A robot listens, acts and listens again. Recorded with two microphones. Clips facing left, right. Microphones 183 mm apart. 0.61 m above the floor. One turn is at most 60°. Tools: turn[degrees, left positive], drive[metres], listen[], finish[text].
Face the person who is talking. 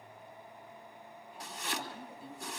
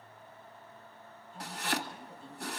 Action: turn[30]
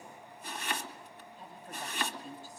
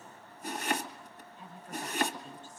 Thought: So it is at 145° left.
Action: turn[60]
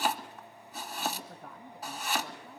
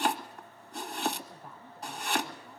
Thought: The woman speaking is now 95° left.
Action: turn[60]
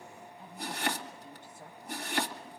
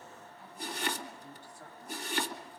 Thought: The woman speaking is now 25° left.
Action: turn[25]
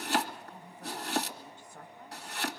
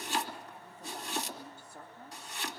Thought: The woman speaking is now 10° right.
Action: turn[-10]
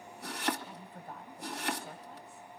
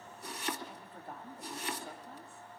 Action: finish[Facing the woman speaking, 2 to 4 m away.]